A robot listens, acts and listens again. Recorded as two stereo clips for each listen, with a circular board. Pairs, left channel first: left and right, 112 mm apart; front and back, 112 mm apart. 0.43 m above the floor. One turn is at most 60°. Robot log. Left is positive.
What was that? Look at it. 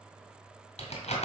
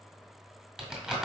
note: The crumpling: 95° left.
cmd yaw +60
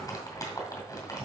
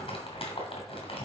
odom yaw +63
note: The crumpling is now 35° left.
cmd yaw +35
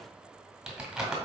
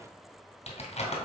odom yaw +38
end: Facing the crumpling.